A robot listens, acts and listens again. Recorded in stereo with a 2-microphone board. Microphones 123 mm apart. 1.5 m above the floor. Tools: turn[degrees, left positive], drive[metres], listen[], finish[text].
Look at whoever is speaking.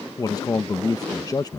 Thought: The man speaking: about 30° left or 150° left.
Action: turn[30]
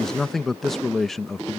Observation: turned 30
Action: finish[Facing the man speaking.]